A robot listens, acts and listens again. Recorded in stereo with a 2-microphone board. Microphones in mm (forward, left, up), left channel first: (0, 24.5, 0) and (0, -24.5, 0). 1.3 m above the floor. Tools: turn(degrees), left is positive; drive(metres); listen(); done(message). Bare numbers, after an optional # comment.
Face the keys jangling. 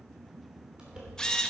# The keys jangling: about 15° right or 165° right.
turn(-15)
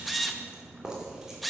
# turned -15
turn(-30)
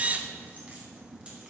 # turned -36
listen()
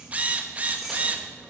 turn(-30)
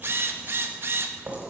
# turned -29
# So it is at 150° right.
turn(-150)
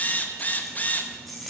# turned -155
done("Facing the keys jangling.")